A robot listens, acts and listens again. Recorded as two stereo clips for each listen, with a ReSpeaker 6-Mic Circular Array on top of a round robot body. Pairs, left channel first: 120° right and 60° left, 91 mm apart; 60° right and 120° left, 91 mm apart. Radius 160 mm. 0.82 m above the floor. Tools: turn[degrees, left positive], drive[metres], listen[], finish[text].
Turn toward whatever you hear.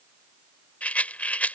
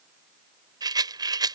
Thought: The rattle: 165° left.
Action: turn[165]
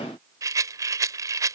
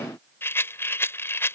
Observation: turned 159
Action: finish[Found it: a rattle, straight ahead.]